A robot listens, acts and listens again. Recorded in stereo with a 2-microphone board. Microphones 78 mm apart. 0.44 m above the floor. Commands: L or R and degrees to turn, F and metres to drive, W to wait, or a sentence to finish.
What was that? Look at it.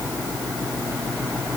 W
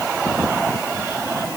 W
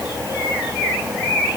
I can't make out anything.